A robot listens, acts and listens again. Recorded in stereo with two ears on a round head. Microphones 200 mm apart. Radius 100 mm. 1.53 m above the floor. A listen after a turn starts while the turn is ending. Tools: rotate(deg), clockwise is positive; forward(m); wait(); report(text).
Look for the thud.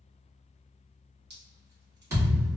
rotate(30)
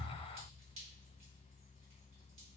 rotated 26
wait()
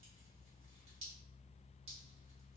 report("I heard a thud, but can't make it out now. It was about 15° left or 140° right.")